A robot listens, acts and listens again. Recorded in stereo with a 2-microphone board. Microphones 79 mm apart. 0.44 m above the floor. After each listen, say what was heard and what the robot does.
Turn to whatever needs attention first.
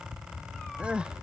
Turn 30° right.
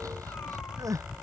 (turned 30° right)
So it is at 135° right. Turn 135° right.
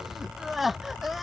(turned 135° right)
Found it: crying, straight ahead.